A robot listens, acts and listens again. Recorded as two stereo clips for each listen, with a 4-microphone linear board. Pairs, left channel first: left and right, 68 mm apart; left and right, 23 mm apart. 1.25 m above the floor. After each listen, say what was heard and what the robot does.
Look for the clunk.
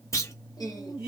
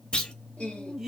The clunk: about 45° left or 135° left. Turn 45° left.
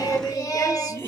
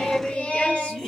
Keep listening.
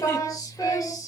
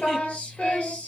I heard a clunk, but can't make it out now. It was about straight ahead or 90° left.